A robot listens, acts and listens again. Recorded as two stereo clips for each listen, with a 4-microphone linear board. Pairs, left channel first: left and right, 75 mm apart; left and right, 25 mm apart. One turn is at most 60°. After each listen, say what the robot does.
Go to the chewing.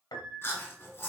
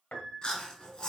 Turn 30° left.
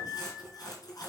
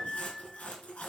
Turn 60° left.
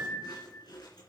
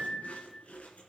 Turn 60° left.
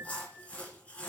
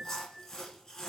Turn 20° left.
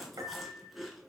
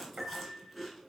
Drive 1.0 m forward.
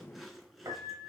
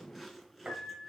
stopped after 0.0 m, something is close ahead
Something is in my way. I am facing the chewing but have not reached it.